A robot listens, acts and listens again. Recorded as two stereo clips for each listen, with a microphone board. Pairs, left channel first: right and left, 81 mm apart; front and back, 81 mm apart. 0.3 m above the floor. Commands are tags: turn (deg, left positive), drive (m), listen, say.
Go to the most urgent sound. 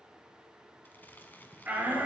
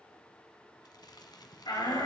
<turn deg="15"/>
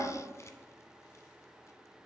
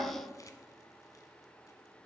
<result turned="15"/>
<drive m="1.0"/>
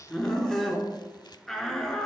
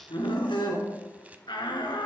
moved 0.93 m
<drive m="1.0"/>
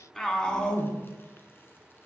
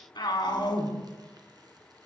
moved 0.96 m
<turn deg="-10"/>
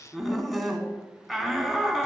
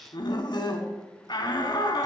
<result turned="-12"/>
<drive m="1.0"/>
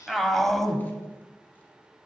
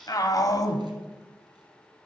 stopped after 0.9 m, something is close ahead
<say>I am next to the shout.</say>